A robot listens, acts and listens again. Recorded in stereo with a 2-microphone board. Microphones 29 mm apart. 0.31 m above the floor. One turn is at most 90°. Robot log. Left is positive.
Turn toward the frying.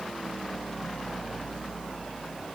cmd idle
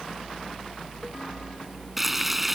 cmd yaw -30
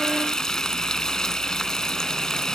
note: So it is at 25° left.
cmd yaw +25
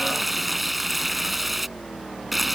end: Facing the frying.